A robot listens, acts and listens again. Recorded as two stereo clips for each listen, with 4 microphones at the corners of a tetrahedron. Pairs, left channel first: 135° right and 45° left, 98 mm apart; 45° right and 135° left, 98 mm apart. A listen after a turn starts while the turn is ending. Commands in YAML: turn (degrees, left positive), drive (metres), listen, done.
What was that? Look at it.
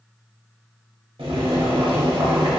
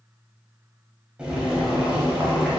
turn: 55
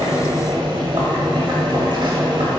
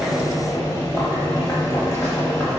turn: 10
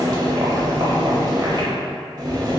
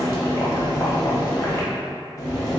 done: "Found it: boiling, straight ahead."